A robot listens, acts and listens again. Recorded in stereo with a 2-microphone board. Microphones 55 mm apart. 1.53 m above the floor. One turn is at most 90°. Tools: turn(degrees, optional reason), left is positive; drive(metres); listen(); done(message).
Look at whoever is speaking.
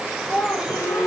turn(degrees=30)
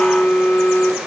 listen()
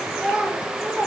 turn(degrees=-20, reason="So it is at 20° right.")
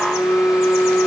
listen()
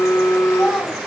done("Found it: a child speaking, straight ahead, over 4 m away.")